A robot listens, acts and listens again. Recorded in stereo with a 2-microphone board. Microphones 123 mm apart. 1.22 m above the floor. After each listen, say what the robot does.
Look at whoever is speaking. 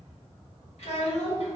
Turn 60° left.
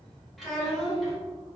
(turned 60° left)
Facing the child speaking.